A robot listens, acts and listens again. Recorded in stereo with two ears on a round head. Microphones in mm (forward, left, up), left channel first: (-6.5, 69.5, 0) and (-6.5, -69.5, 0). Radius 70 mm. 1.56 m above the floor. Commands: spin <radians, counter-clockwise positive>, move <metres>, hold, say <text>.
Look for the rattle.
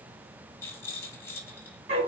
spin 0.35
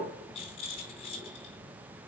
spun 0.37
spin 2.44
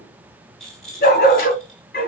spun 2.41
say Facing the rattle.